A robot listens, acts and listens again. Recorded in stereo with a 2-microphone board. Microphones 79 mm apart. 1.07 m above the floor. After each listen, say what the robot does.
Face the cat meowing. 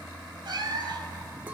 Turn 70° right.
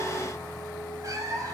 Turn 50° right.
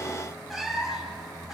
Found it: a cat meowing, straight ahead, 2 to 4 m away.